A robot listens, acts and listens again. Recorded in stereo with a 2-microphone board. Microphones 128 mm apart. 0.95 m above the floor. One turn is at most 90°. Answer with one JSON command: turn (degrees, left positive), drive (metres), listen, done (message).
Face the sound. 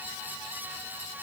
{"listen": true}
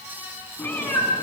{"turn": 20}
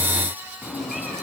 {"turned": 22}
{"turn": 30}
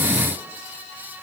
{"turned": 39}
{"listen": true}
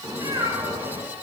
{"turn": -25}
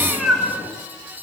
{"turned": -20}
{"done": "Facing the cat meowing."}